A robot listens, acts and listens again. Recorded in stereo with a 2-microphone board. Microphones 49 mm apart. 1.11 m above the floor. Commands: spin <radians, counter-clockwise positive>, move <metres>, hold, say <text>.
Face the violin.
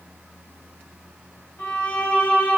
spin 0.79
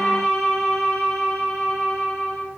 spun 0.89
say Found it: a violin, straight ahead.